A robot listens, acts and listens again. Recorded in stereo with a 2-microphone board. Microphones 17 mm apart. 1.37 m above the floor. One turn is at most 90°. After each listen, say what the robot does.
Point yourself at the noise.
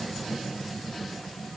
Keep listening.
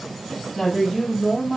Turn 30° right.
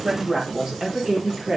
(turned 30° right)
Turn 90° right.
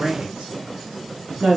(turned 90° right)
Turn 75° right.
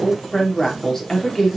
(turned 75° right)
Turn 25° left.
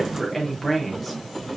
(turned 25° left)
Turn 10° left.
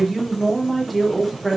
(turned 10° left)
Facing the woman speaking.